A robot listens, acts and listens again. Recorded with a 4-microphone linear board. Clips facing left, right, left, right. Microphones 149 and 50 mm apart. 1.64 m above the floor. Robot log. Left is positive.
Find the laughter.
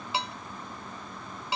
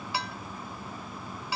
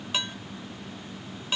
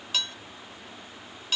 cmd idle
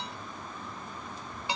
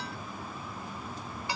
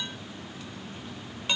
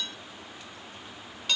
cmd idle
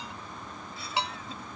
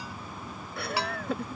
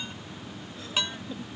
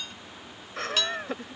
note: The laughter: about 70° right or 110° right.
cmd yaw -70
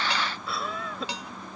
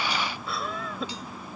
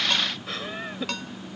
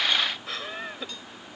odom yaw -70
end: Facing the laughter.